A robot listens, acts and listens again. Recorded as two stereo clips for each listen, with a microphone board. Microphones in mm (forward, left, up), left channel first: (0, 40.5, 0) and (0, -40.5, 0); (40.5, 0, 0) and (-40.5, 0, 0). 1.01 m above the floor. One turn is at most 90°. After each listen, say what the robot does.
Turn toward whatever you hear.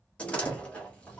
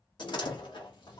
Turn 15° left.
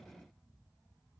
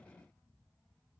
I heard a door slam from this way, but can't make it out now.